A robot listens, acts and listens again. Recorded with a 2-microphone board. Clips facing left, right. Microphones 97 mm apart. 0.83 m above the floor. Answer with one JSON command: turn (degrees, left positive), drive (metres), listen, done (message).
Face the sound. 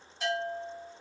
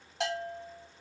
{"turn": -90}
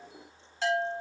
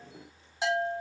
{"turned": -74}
{"turn": -15}
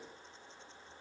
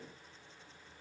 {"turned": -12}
{"listen": true}
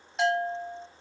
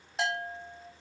{"done": "Found it: a bell, straight ahead, over 4 m away."}